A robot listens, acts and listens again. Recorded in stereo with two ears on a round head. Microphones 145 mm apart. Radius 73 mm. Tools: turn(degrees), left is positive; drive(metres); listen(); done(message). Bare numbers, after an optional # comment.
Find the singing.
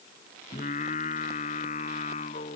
# The singing: about 40° left or 140° left.
turn(40)
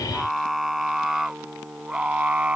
# So it is at 10° right.
turn(-10)
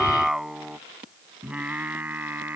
# The singing is now 10° right.
turn(-10)
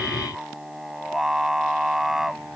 done("Facing the singing.")